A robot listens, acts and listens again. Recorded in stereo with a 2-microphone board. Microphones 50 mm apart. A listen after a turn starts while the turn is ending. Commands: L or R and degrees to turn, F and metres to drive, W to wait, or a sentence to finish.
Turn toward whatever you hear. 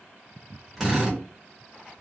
L30
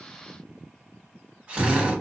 R35
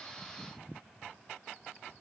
W
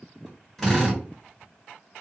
Found it: a drill, straight ahead, 1 to 2 m away.